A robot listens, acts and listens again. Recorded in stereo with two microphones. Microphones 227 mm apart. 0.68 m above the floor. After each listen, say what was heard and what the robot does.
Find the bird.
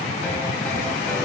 Keep listening.
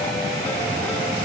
Keep listening.
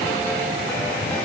I can't make out a bird.